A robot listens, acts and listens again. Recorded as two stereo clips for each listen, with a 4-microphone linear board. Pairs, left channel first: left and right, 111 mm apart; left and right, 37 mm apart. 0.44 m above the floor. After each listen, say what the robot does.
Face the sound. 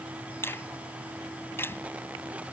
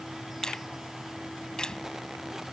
Turn 20° left.
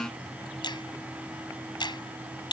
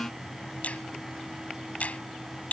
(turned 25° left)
Turn 135° left.
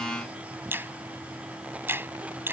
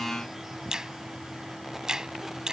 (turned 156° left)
Turn 20° right.
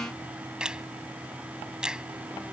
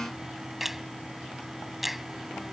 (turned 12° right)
Turn 10° right.
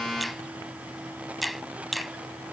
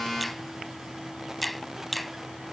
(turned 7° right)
Facing the finger snap.